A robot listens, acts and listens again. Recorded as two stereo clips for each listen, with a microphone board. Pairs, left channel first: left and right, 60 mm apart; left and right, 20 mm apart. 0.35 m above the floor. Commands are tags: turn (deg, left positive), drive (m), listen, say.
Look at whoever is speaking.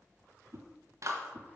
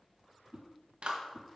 <listen/>
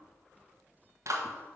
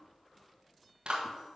<listen/>
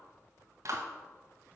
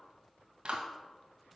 <say>I can't make out anyone speaking to turn to.</say>